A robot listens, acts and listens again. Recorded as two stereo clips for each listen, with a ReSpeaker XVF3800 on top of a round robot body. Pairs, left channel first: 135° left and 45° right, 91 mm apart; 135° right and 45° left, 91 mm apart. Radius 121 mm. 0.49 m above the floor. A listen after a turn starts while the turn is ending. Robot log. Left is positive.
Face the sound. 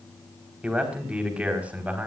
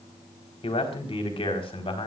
note: The man speaking: 120° right.
cmd yaw -120
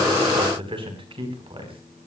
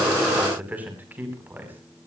note: The man speaking is now 25° right.
cmd yaw -25
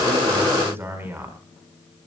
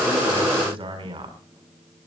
note: The man speaking is now 20° left.
cmd yaw +20
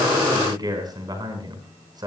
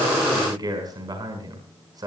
end: Found it: a man speaking, straight ahead, over 4 m away.